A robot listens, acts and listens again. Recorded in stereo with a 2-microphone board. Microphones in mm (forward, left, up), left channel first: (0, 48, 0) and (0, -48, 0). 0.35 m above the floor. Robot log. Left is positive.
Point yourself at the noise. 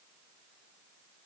cmd idle
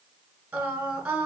note: The singing: about 20° right or 160° right.
cmd yaw -20
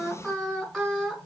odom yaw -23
end: Found it: singing, straight ahead.